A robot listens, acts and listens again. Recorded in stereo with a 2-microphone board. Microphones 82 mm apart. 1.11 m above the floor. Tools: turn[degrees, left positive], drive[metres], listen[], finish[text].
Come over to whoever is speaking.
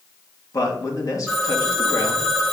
Thought: The man speaking: about 45° left or 135° left.
Action: turn[45]
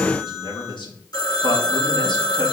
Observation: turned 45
Thought: So it is at 90° left.
Action: turn[90]
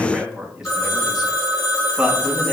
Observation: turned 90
Action: drive[1.0]
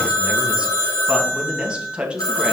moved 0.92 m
Thought: The man speaking is now 10° right.
Action: turn[-10]
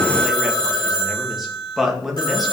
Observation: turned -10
Action: drive[1.0]
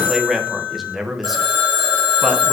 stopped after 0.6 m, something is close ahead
Action: finish[I am next to the man speaking.]